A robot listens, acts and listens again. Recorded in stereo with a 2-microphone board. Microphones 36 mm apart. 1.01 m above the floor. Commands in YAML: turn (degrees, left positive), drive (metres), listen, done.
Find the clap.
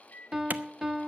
turn: -50
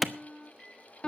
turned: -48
done: "Found it: a clap, straight ahead."